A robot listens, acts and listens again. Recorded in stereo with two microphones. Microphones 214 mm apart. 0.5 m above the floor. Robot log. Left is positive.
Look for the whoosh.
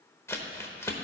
cmd idle
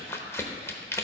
cmd idle
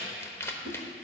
note: The whoosh: about 70° right or 110° right.
cmd yaw -70
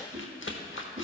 note: So it is at 35° right.
cmd yaw -35
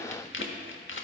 cmd idle
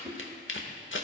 note: The whoosh is now 20° right.
cmd yaw -20
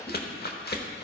cmd idle
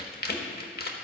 cmd idle
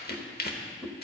end: Found it: a whoosh, straight ahead, under 1 m away.